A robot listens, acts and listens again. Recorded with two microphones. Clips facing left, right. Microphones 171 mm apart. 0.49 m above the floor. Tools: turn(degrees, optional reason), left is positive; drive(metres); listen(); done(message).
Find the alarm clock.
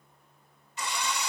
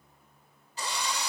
listen()
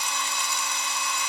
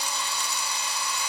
listen()
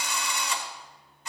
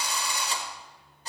done("I can't make out an alarm clock, only a drill.")